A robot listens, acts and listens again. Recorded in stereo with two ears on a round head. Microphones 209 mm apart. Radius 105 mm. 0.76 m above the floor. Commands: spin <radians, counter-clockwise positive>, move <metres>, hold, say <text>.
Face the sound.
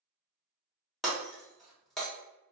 spin 0.52
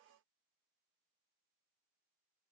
hold
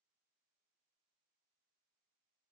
say I heard breaking glass, but can't make it out now. It was about 30° right or 150° left.